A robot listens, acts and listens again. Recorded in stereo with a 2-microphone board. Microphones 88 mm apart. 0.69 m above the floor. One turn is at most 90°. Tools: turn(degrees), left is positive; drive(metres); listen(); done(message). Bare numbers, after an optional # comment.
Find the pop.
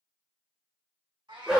listen()
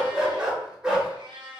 listen()
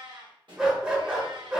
# The pop: about 60° right or 120° right.
turn(-60)
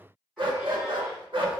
listen()
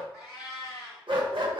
done("I heard a pop, but can't make it out now. It was about straight ahead or 60° right.")